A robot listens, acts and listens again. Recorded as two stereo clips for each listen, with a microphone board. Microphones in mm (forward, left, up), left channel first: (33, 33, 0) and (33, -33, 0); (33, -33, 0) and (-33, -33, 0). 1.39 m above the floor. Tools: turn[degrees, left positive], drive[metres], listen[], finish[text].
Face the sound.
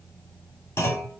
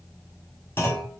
Thought: The clunk: 45° left.
Action: turn[45]
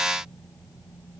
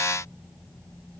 Action: finish[I heard a clunk from this way, but can't make it out now.]